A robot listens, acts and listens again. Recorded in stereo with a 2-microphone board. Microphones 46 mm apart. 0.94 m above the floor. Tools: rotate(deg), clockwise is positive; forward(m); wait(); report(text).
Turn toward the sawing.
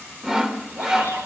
rotate(30)
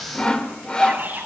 rotate(-20)
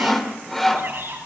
report("Found it: sawing, straight ahead, 2 to 4 m away.")